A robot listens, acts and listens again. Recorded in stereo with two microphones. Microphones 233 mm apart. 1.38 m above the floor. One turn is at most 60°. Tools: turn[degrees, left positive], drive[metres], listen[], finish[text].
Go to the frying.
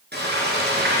Thought: The frying: about 50° right or 130° right.
Action: turn[-50]
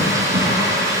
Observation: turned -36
Thought: So it is at 15° right.
Action: turn[-15]
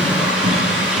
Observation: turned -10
Action: drive[1.0]
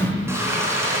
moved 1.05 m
Thought: The frying is now 10° right.
Action: turn[-10]
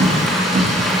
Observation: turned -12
Action: drive[1.0]
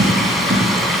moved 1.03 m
Action: drive[1.0]
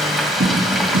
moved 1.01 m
Action: drive[1.0]
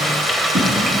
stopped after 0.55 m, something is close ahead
Action: finish[Arrived at the frying, straight ahead.]